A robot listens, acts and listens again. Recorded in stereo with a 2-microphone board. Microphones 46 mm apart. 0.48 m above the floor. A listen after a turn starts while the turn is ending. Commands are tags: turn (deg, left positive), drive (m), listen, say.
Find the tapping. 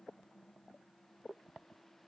<listen/>
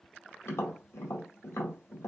<turn deg="65"/>
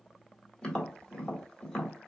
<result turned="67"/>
<turn deg="15"/>
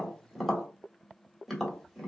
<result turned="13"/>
<say>Facing the tapping, 1 to 2 m away.</say>